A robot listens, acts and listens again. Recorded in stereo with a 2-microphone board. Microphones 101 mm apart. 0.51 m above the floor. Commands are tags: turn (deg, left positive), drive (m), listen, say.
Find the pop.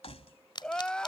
<turn deg="50"/>
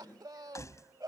<listen/>
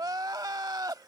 <say>I heard a pop, but can't make it out now. It was about straight ahead or 80° left.</say>